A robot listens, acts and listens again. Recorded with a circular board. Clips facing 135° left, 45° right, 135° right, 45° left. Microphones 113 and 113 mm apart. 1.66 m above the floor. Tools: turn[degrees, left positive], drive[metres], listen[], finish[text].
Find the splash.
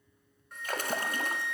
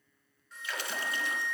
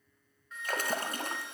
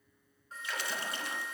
Thought: The splash: straight behind.
Action: turn[180]
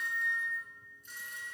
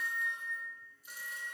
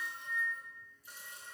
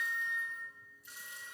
Action: finish[I heard a splash from this way, but can't make it out now.]